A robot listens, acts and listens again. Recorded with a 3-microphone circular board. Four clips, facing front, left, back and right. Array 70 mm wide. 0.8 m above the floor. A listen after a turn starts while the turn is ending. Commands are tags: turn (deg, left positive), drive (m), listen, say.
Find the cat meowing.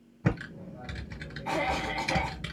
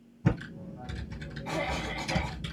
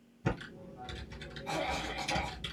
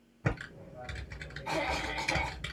<listen/>
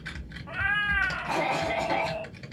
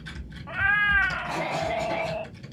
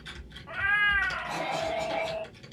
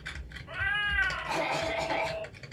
<turn deg="75"/>
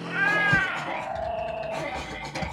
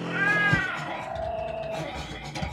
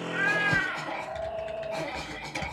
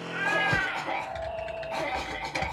<turn deg="10"/>
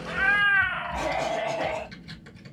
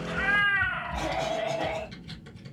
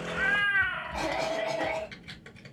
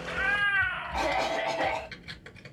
<say>Found it: a cat meowing, straight ahead.</say>